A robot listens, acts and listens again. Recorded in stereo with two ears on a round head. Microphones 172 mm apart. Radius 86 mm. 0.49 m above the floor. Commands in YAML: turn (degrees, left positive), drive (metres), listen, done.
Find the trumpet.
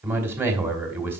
listen: true
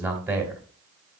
listen: true
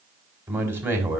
done: "I can't make out a trumpet to turn to."